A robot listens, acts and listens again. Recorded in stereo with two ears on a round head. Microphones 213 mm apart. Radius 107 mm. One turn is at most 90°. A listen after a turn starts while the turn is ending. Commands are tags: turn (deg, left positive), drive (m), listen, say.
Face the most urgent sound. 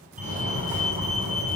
<turn deg="-30"/>
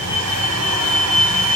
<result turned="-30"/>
<say>Facing the fire alarm, over 4 m away.</say>